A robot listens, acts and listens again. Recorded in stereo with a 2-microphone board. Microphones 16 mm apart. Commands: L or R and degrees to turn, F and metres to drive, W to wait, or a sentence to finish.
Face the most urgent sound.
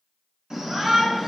R35
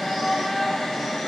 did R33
Facing the shout.